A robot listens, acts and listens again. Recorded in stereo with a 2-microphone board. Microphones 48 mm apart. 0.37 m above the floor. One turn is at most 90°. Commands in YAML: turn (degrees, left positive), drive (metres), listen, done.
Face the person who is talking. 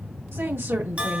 turn: -60
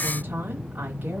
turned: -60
turn: -45
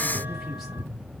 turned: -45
listen: true
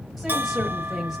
done: "Facing the woman speaking."